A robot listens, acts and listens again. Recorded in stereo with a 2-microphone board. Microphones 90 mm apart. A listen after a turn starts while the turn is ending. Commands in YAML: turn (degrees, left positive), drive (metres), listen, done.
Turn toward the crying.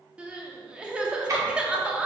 turn: -30
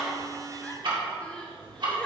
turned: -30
listen: true
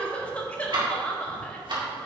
turn: 15
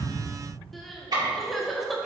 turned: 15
done: "Facing the crying, under 1 m away."